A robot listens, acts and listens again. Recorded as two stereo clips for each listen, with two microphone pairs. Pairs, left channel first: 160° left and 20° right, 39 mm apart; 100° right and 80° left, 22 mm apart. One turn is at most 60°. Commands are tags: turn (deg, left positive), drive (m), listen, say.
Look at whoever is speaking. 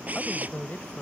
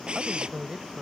<turn deg="60"/>
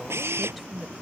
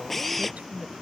<turn deg="60"/>
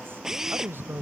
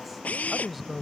<turn deg="-10"/>
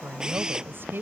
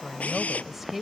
<say>Found it: a woman speaking, straight ahead.</say>